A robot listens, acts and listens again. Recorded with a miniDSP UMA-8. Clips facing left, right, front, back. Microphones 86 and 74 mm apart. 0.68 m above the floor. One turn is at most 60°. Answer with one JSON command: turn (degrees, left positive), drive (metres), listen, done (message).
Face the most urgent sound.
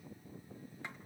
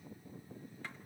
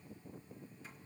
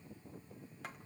{"listen": true}
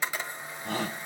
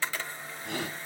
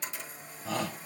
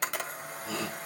{"turn": 40}
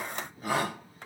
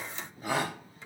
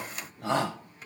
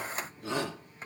{"done": "Found it: a shout, straight ahead."}